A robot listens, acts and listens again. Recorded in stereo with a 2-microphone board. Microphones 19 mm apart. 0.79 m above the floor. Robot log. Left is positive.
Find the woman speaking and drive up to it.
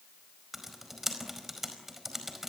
cmd idle
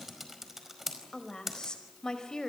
note: The woman speaking: about 40° left or 140° left.
cmd yaw +40
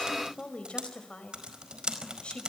note: So it is at 100° left.
cmd yaw +100
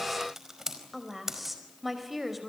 cmd fwd 1.0
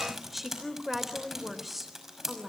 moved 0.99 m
cmd fwd 1.0
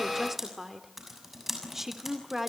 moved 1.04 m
note: The woman speaking is now 10° right.
cmd yaw -10
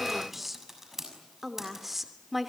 cmd fwd 1.0
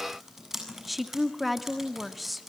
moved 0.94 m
cmd fwd 1.0
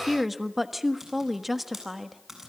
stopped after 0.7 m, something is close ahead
end: I am next to the woman speaking.